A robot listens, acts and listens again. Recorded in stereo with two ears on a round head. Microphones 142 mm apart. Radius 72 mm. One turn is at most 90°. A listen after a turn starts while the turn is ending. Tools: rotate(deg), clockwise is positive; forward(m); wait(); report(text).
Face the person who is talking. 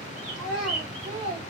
rotate(30)
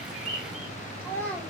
rotate(-10)
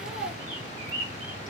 report("Found it: a child speaking, straight ahead, 1 to 2 m away.")